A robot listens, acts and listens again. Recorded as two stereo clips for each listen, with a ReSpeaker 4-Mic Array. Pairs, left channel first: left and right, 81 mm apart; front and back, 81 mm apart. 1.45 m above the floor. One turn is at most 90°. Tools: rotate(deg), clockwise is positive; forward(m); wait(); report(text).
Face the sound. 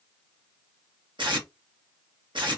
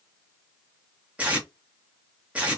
rotate(90)
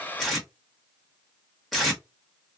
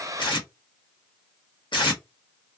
report("Facing the tape being pulled.")